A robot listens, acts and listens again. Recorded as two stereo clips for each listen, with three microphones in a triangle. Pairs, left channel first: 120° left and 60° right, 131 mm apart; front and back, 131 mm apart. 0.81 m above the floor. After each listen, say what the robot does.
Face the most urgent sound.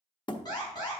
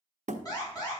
Turn 60° left.
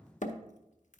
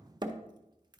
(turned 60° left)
Keep listening.
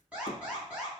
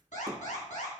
Turn 20° left.
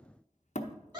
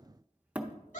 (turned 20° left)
Facing the alarm.